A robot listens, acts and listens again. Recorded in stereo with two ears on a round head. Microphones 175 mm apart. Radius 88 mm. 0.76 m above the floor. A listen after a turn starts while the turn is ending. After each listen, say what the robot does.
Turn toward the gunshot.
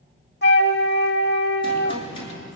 Turn 25° left.
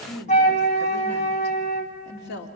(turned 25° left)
Keep listening.
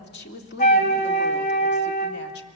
I heard a gunshot, but can't make it out now. It was about straight ahead or 130° left.